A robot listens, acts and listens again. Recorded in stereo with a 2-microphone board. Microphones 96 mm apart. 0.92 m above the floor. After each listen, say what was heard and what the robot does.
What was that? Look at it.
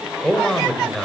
Turn 30° left.
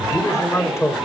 So it is at 150° left. Turn 150° left.
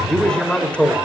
The man speaking is now 15° left. Turn 15° left.
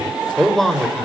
Found it: a man speaking, straight ahead.